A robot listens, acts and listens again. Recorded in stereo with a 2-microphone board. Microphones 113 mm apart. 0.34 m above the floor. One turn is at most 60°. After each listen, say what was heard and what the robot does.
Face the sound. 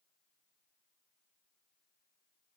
Keep listening.
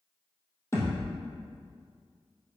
The thud: about 25° left or 155° left. Turn 25° left.
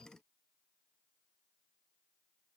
Keep listening.
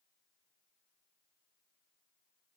I heard a thud, but can't make it out now. It was about straight ahead or 130° left.